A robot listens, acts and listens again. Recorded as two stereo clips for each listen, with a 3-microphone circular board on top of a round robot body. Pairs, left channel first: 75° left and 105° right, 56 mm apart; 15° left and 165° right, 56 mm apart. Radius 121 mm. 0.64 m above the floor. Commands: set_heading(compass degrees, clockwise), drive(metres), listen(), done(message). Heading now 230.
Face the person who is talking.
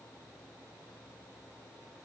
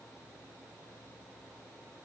listen()
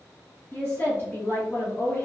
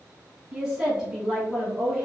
set_heading(110)
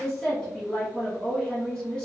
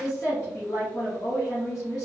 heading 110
done("Facing the woman speaking, 1 to 2 m away.")